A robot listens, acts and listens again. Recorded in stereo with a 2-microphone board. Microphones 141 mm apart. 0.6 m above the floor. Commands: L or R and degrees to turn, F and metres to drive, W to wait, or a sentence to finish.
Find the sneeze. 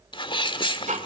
L35
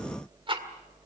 W
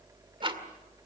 I heard a sneeze, but can't make it out now. It was about straight ahead or 110° left.